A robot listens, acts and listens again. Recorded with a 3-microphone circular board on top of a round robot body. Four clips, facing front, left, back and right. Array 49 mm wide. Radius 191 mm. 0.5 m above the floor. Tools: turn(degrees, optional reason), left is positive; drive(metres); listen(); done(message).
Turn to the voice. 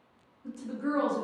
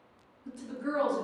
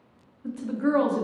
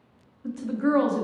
turn(degrees=-135, reason="The woman speaking: 135° right.")
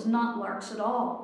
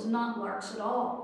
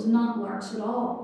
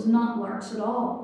done("Facing the woman speaking, 1 to 2 m away.")